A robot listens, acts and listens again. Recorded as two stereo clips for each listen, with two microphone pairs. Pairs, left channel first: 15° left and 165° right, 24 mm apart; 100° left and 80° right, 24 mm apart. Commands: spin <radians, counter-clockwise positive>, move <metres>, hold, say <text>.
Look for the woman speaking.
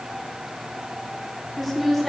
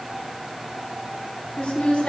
spin 1.57
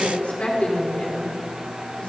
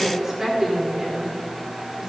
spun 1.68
spin -0.17
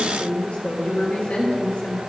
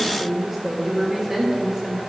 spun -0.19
spin -0.17
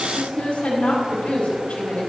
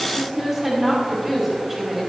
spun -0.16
say Found it: a woman speaking, straight ahead.